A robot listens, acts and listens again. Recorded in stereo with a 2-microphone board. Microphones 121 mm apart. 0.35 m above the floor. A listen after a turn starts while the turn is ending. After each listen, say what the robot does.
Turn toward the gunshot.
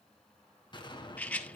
Turn 40° left.
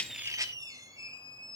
Keep listening.
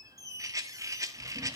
I heard a gunshot, but can't make it out now. It was about straight ahead or 100° left.